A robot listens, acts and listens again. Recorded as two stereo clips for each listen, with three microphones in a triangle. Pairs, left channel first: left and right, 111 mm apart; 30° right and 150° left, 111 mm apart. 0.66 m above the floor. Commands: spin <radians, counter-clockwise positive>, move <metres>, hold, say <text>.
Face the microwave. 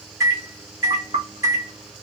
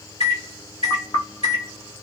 spin -0.61
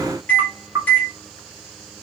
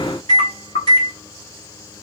spin 0.35
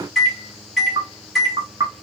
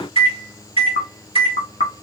say Facing the microwave, 1 to 2 m away.